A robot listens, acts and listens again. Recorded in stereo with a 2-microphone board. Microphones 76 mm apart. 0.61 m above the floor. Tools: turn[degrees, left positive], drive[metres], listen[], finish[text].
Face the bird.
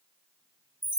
Action: listen[]
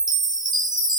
Action: listen[]
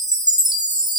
Action: finish[I can't make out a bird to turn to.]